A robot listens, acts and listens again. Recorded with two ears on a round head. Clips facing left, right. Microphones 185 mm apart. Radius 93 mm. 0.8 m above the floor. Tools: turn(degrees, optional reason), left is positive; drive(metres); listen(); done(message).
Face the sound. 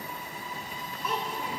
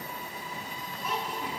turn(degrees=75, reason="The child speaking: about 75° left or 105° left.")
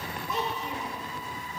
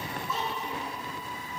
turn(degrees=20, reason="So it is at 20° left.")
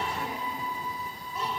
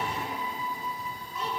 turn(degrees=35, reason="The child speaking is now 35° left.")
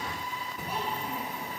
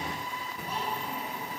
turn(degrees=10, reason="The child speaking is now 10° left.")
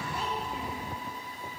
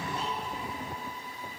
done("Facing the child speaking.")